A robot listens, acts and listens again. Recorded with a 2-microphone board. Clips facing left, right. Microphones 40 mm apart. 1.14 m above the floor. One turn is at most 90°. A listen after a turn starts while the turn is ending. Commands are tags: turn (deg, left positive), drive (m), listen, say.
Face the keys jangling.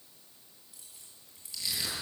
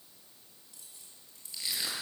<turn deg="30"/>
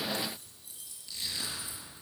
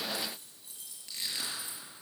<turn deg="-25"/>
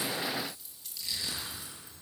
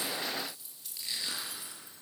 <say>Found it: keys jangling, straight ahead.</say>